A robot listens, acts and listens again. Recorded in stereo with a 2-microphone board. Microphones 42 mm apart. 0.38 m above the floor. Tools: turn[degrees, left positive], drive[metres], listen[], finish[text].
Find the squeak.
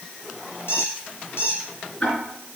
Thought: The squeak: about 70° left or 110° left.
Action: turn[70]
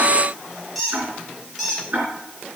Action: finish[Found it: a squeak, straight ahead.]